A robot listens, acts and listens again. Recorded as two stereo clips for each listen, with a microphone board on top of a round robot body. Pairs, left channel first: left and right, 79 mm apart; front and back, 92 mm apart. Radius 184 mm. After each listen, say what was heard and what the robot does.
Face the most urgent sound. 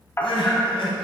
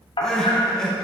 The crying: 85° left. Turn 85° left.
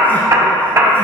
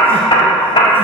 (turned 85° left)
Keep listening.
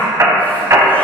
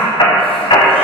Keep listening.
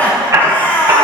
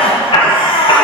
The crying is now 20° left. Turn 20° left.
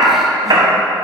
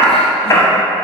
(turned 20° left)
Keep listening.
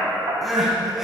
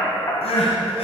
Facing the crying, under 1 m away.